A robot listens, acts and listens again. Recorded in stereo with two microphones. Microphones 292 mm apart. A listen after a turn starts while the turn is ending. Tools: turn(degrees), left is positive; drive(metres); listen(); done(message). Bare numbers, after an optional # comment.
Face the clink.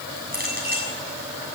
# The clink: about 30° right or 150° right.
turn(-30)
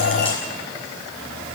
listen()
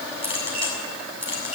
# So it is at 115° right.
turn(-115)
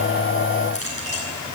# The clink is now 55° right.
turn(-55)
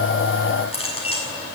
# The clink is now 20° left.
turn(20)
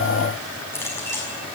# The clink is now 10° left.
turn(10)
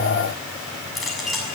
done("Facing the clink, over 4 m away.")